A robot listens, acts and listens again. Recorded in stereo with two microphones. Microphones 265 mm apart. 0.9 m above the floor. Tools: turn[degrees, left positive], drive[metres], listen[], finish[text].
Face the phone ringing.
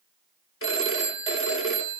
Thought: The phone ringing: about 50° left or 130° left.
Action: turn[50]
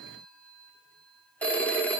Action: finish[Found it: a phone ringing, straight ahead, 1 to 2 m away.]